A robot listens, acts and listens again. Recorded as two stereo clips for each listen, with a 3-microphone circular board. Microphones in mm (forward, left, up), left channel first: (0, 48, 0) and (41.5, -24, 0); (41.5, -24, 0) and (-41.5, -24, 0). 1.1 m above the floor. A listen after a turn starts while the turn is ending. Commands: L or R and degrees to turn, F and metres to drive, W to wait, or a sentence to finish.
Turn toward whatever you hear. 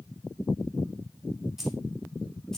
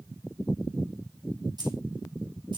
R160
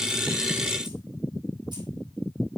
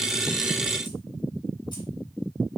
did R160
W
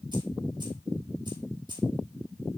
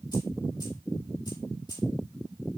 R35
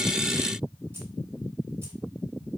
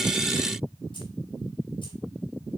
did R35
W
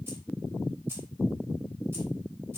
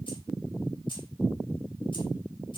Found it: keys jangling, straight ahead, 2 to 4 m away.